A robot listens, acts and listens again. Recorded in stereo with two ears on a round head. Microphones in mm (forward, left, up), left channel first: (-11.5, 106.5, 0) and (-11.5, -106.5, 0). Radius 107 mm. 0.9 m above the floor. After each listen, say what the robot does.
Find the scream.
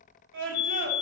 Turn 55° right.
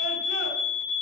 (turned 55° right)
Keep listening.
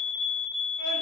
Keep listening.
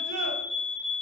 I heard a scream, but can't make it out now. It was about straight ahead or 70° right.